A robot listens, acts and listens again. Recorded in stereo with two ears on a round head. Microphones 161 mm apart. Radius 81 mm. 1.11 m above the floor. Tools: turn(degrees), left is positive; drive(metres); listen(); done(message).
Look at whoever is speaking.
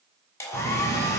turn(degrees=-40)
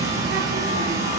turn(degrees=-100)
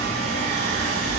turn(degrees=45)
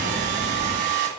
turn(degrees=15)
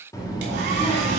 turn(degrees=30)
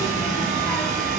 turn(degrees=10)
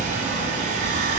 done("Found it: a child speaking, straight ahead.")